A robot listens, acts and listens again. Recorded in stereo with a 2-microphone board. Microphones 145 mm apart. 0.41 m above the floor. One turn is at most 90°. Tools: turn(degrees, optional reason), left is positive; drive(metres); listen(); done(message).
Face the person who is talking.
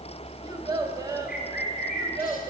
turn(degrees=-25, reason="The child speaking: about 25° right or 155° right.")
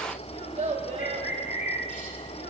turn(degrees=-90, reason="So it is at 130° right.")
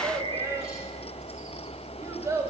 turn(degrees=-25, reason="The child speaking is now 25° right.")
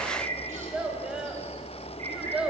done("Facing the child speaking.")